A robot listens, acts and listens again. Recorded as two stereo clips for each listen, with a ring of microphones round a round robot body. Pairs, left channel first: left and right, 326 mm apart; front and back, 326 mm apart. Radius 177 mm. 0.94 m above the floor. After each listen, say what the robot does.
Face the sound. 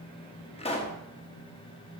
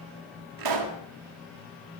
Turn 165° left.
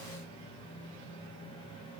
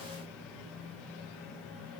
I heard a pop from this way, but can't make it out now.